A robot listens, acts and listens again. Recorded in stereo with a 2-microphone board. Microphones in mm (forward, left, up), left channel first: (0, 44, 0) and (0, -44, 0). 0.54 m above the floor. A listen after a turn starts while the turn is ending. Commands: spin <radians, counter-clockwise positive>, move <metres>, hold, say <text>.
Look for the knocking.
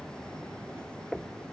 spin 0.52
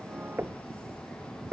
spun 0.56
spin -0.44
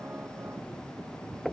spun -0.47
say Facing the knocking.